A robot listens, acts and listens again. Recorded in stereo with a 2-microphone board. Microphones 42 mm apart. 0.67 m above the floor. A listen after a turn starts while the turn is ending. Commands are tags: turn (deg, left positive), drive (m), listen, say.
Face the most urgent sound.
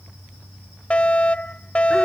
<turn deg="30"/>
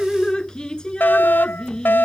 <turn deg="115"/>
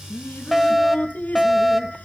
<say>Facing the fire alarm.</say>